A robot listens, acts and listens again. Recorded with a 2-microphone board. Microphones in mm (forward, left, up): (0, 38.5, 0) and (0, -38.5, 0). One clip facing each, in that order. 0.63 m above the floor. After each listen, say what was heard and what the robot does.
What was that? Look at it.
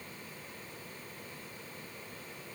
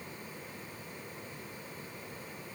Keep listening.
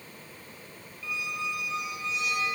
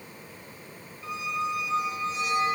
The squeak: about 35° right or 145° right. Turn 35° right.
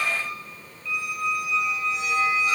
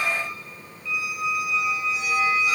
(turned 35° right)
Found it: a squeak, straight ahead, 1 to 2 m away.